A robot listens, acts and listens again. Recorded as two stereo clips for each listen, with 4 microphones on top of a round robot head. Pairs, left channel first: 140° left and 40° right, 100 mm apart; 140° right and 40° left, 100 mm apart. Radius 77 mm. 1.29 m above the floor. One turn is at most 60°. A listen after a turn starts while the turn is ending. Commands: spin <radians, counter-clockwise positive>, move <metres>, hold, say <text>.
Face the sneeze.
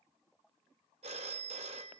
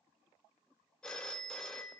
hold
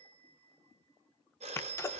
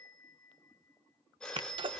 spin 1.05
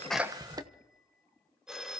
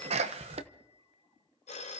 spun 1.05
spin 0.26
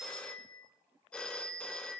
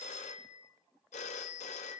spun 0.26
say I heard a sneeze from this way, but can't make it out now.